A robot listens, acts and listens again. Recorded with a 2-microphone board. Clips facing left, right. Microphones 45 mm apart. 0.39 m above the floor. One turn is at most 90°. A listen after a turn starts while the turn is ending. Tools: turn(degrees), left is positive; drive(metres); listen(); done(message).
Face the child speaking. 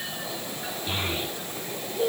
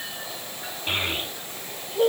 turn(degrees=-55)
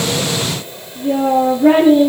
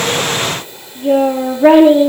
turn(degrees=-70)
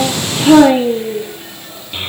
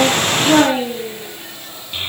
turn(degrees=10)
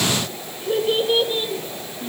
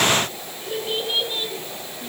done("Facing the child speaking.")